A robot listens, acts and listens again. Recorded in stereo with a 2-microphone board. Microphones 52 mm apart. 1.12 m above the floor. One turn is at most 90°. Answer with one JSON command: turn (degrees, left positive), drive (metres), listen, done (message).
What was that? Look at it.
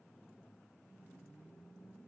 {"listen": true}
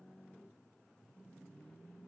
{"listen": true}
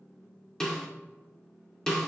{"turn": 30}
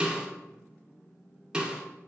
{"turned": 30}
{"turn": -20}
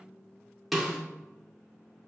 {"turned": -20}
{"done": "Facing the snare drum, 2 to 4 m away."}